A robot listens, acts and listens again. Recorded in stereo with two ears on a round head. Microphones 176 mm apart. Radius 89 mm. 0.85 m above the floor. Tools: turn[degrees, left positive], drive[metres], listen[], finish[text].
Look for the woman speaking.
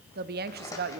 Thought: The woman speaking: about 55° right or 125° right.
Action: turn[-55]
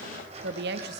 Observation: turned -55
Thought: So it is at 65° right.
Action: turn[-65]
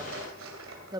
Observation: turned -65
Thought: The woman speaking is now 20° right.
Action: turn[-20]
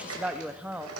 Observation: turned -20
Action: finish[Found it: a woman speaking, straight ahead, under 1 m away.]